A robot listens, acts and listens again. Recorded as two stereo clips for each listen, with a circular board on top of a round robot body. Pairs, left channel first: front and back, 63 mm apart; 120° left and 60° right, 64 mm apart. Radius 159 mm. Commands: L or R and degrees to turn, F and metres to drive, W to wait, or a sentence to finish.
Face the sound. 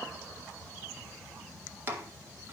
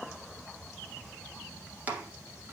R125
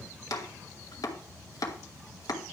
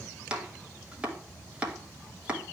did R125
L15
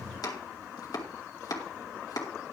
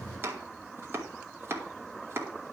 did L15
Facing the chopping, 2 to 4 m away.